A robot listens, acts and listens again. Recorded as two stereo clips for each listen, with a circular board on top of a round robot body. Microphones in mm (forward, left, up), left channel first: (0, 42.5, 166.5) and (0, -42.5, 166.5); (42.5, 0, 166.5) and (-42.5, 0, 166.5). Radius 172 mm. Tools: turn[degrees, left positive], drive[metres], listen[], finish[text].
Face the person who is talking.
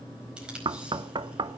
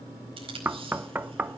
Action: listen[]
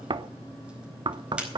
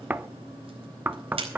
Action: listen[]
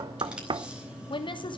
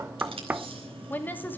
Thought: The woman speaking: 65° left.
Action: turn[65]
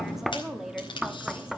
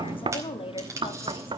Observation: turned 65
Action: finish[Facing the woman speaking, 2 to 4 m away.]